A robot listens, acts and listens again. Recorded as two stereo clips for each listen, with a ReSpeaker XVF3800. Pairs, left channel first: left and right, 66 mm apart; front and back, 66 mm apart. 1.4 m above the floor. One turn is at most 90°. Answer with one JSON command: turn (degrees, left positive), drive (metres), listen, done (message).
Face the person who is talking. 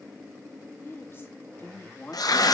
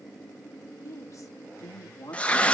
{"turn": 35}
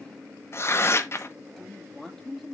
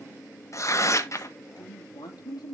{"done": "Facing the woman speaking."}